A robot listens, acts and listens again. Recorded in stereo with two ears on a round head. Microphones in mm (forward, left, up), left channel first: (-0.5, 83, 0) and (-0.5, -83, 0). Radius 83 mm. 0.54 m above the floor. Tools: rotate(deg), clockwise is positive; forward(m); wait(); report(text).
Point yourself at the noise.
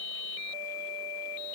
wait()
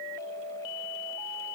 wait()
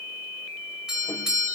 rotate(30)
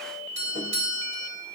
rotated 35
rotate(140)
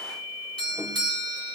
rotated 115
rotate(25)
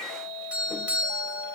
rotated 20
rotate(10)
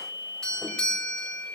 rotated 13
report("Found it: a doorbell, straight ahead.")